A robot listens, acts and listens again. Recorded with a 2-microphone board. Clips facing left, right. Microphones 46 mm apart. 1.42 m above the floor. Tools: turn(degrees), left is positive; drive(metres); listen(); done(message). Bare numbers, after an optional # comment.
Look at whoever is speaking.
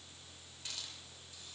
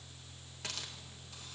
listen()
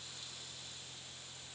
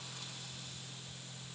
listen()
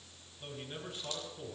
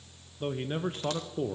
# The man speaking: about 40° right or 140° right.
turn(-40)
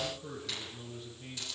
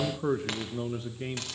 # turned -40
# So it is at 95° right.
turn(-95)
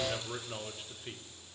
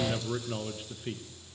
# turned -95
done("Facing the man speaking, under 1 m away.")